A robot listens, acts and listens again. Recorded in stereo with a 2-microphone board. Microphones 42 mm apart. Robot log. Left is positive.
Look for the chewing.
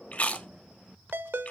note: The chewing: about 40° left or 140° left.
cmd yaw +40
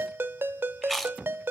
end: Found it: chewing, straight ahead.